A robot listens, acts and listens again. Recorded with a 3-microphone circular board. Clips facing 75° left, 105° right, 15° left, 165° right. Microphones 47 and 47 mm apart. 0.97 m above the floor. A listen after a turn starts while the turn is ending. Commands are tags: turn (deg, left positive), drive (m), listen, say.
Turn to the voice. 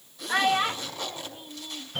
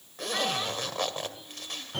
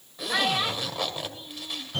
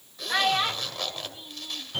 <turn deg="115"/>
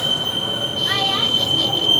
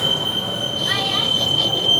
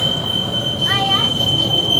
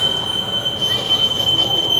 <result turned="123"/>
<listen/>
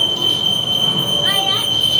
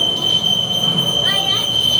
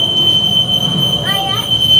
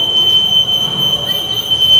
<listen/>
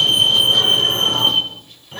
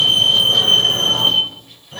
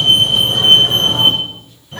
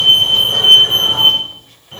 <say>Facing where the child speaking came from. I can't hear it now.</say>